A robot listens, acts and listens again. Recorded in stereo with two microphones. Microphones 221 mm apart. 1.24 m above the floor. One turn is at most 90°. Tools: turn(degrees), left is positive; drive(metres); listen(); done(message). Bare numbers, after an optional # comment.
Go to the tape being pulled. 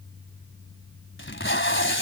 # The tape being pulled: about 60° left or 120° left.
turn(60)
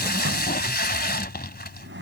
# So it is at 50° left.
turn(50)
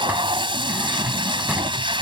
# The tape being pulled is now 25° right.
turn(-25)
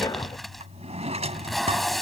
drive(1.0)
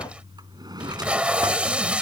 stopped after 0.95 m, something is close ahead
done("I am next to the tape being pulled.")